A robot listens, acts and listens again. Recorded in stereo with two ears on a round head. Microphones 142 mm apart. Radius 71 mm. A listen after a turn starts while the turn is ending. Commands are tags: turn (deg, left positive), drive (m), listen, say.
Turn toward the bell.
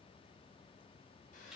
<listen/>
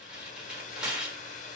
<listen/>
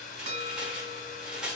<turn deg="-45"/>
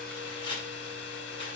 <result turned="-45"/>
<listen/>
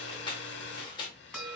<say>Found it: a bell, straight ahead, 2 to 4 m away.</say>